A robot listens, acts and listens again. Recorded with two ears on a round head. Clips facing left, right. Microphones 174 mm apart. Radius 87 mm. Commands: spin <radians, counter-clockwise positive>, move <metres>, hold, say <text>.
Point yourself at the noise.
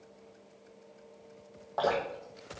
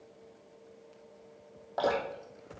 spin -0.35
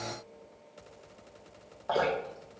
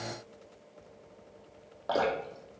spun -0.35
spin -2.53
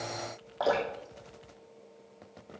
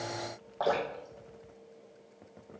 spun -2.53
say Facing the dripping.